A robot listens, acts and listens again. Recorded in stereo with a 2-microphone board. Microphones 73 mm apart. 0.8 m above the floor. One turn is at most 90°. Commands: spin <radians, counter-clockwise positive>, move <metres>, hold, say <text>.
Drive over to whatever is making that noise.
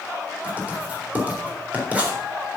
spin -0.35
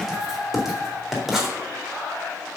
move 1.0
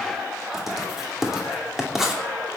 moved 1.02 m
move 1.0
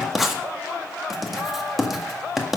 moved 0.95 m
move 1.0
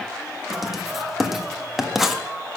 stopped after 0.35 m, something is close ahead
say I am next to the writing.